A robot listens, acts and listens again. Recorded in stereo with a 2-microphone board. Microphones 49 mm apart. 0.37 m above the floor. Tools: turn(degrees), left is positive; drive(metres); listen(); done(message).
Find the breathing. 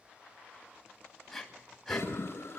turn(degrees=30)
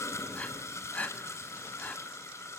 turn(degrees=145)
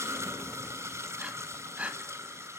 turn(degrees=-30)
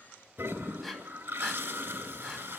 done("Found it: breathing, straight ahead, 2 to 4 m away.")